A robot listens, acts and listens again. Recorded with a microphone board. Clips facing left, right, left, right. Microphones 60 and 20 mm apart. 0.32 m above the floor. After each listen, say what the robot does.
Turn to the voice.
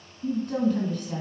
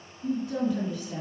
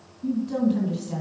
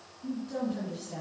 Turn 60° left.
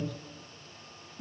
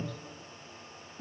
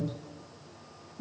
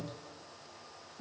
Turn 25° left.
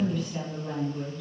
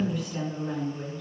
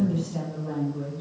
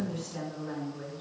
Facing the woman speaking, 2 to 4 m away.